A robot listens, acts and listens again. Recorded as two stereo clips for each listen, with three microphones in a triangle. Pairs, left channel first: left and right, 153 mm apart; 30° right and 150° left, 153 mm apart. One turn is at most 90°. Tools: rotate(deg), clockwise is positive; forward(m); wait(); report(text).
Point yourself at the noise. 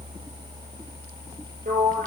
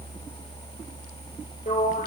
rotate(60)
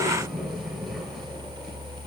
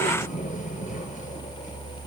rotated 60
report("Found it: a sliding door, straight ahead.")